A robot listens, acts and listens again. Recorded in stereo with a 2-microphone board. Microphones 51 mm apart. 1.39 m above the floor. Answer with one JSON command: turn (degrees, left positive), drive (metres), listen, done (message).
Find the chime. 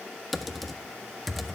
{"listen": true}
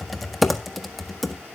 {"listen": true}
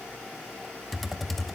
{"done": "I can't make out a chime, only typing on a keyboard."}